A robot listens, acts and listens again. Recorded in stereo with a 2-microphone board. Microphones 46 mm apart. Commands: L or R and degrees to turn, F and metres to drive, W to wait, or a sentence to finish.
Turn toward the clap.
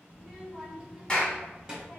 L20
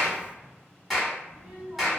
Found it: a clap, straight ahead, 1 to 2 m away.